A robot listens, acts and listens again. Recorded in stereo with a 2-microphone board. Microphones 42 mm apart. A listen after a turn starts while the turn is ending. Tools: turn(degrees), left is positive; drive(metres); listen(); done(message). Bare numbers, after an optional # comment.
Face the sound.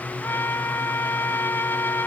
# The trumpet: about 65° left or 115° left.
turn(65)
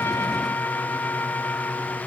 # So it is at 50° left.
turn(50)
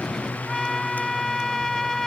# The trumpet is now 10° left.
turn(10)
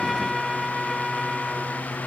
done("Facing the trumpet.")